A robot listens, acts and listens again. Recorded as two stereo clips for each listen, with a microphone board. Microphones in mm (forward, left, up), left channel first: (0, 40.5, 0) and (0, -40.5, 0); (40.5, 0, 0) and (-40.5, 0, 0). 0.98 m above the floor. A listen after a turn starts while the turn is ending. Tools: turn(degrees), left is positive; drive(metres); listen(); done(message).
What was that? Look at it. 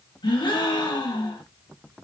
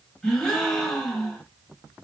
turn(degrees=80)
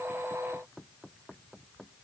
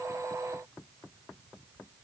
done("I heard a gasp from this way, but can't make it out now.")